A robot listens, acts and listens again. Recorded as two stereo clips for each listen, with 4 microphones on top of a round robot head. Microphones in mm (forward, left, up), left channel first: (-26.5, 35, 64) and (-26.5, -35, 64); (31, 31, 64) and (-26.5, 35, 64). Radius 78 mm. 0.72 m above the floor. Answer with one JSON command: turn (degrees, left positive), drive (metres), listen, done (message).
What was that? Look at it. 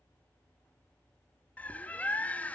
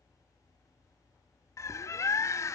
{"turn": 20}
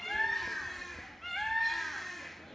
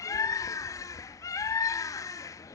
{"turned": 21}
{"done": "Found it: a bird, straight ahead."}